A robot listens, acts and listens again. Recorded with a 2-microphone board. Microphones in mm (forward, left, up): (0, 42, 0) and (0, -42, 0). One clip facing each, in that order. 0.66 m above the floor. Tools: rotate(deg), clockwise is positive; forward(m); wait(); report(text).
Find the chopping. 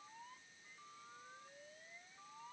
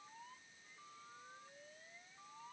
wait()
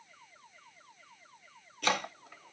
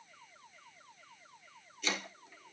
rotate(-60)
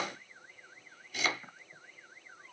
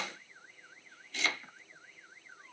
rotate(-10)
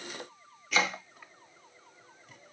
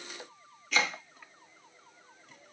report("Found it: chopping, straight ahead.")